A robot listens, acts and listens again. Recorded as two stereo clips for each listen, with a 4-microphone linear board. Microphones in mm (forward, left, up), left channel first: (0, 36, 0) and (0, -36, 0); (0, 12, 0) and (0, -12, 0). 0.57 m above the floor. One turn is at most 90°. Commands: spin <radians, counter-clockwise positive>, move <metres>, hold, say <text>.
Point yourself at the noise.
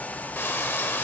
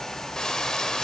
spin 0.52
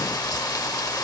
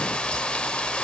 spin 1.57
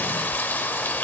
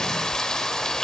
spin 0.52
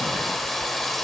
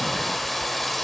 say Facing the frying.